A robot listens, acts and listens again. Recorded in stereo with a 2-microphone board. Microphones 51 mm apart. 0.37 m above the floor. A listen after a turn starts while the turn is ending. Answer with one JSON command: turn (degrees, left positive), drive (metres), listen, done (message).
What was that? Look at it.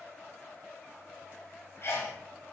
{"turn": 55}
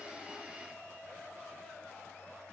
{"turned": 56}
{"listen": true}
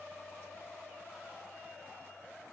{"done": "I heard a sneeze, but can't make it out now. It was about straight ahead or 70° left."}